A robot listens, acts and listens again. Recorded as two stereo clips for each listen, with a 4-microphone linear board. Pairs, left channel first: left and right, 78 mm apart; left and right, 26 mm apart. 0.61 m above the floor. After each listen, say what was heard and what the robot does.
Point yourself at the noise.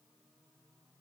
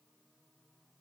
Keep listening.
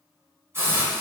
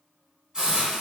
The hiss: about 35° right or 145° right. Turn 35° right.
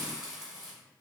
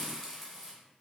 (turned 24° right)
So it is at 10° right. Turn 10° right.
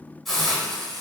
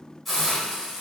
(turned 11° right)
Found it: a hiss, straight ahead, 1 to 2 m away.